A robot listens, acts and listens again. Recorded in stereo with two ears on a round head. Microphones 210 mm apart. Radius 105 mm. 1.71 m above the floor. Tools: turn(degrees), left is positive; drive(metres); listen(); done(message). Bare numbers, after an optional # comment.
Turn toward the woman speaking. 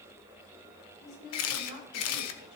# The woman speaking: about 45° left or 135° left.
turn(45)
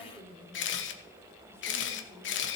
done("Facing the woman speaking.")